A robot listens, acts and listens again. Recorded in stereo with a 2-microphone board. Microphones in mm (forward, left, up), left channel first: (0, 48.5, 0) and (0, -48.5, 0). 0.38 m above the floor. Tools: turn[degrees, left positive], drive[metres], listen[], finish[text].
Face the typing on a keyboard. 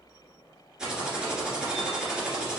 Action: turn[-30]
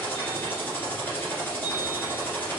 Thought: So it is at 25° left.
Action: turn[25]
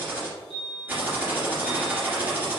Thought: The typing on a keyboard is now 15° right.
Action: turn[-15]
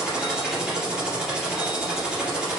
Action: finish[Facing the typing on a keyboard, 1 to 2 m away.]